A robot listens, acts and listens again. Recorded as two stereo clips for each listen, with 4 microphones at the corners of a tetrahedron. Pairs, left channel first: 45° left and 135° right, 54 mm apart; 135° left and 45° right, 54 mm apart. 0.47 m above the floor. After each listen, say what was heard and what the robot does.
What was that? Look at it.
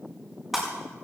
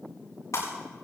The breaking glass: 135° left. Turn 135° left.
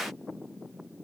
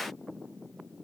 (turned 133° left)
I heard breaking glass from this way, but can't make it out now.